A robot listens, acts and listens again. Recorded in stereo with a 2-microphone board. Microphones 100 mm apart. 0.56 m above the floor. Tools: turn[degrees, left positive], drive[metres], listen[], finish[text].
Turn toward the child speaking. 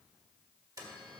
Action: listen[]
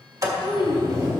Thought: The child speaking: about 70° left or 110° left.
Action: turn[70]
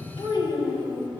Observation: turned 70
Thought: So it is at 65° left.
Action: turn[65]
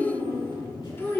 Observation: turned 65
Thought: The child speaking is now 25° left.
Action: turn[25]
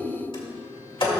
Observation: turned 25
Thought: The child speaking is now 15° left.
Action: turn[15]
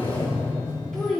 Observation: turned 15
Action: finish[Found it: a child speaking, straight ahead, 2 to 4 m away.]